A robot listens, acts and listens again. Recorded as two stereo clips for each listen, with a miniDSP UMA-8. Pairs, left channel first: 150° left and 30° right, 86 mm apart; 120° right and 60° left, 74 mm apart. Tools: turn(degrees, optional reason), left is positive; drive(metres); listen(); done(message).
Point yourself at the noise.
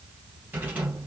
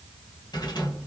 turn(degrees=-100, reason="The rattle: 100° right.")
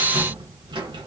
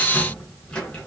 turn(degrees=-45, reason="The rattle is now 45° right.")
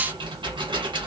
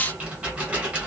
turn(degrees=-10, reason="The rattle is now 10° right.")
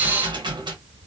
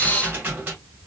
done("Found it: a rattle, straight ahead.")